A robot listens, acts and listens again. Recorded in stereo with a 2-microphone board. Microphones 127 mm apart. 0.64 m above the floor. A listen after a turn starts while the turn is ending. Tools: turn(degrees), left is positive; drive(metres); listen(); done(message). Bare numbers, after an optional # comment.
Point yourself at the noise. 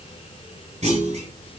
# The clunk: about 70° right or 110° right.
turn(-70)
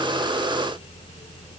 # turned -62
listen()
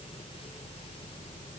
done("I heard a clunk, but can't make it out now. It was about 5° right or 50° right.")